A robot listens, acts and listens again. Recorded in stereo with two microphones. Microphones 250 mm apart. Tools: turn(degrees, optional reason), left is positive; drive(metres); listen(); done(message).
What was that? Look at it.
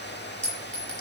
turn(degrees=30)
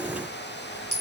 turn(degrees=145, reason="So it is at 145° left.")
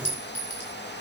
turn(degrees=45, reason="The clink is now 45° left.")
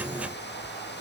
listen()
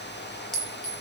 done("Facing the clink, over 4 m away.")